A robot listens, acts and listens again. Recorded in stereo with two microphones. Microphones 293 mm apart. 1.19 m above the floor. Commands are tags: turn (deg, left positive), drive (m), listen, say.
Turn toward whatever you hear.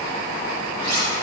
<turn deg="-70"/>
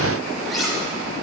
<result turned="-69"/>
<say>Facing the cutlery clinking, 2 to 4 m away.</say>